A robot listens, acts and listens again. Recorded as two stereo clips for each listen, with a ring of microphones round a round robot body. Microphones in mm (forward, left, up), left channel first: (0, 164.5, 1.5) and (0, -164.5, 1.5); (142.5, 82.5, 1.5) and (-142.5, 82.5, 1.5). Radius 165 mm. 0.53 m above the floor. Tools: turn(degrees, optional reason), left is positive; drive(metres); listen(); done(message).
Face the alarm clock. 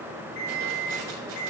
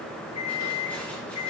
turn(degrees=30, reason="The alarm clock: 30° left.")
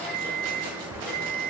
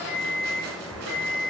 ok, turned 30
done("Facing the alarm clock.")